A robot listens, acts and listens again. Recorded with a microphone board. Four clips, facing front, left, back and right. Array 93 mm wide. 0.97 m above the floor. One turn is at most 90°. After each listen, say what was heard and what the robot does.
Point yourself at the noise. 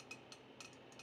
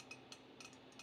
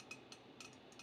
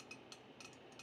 Keep listening.
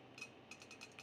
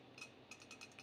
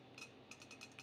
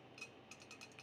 Keep listening.
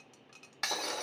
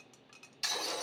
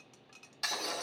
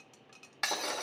The breaking glass: 60° right. Turn 60° right.
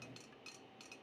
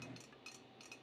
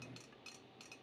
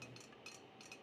I heard breaking glass from this way, but can't make it out now.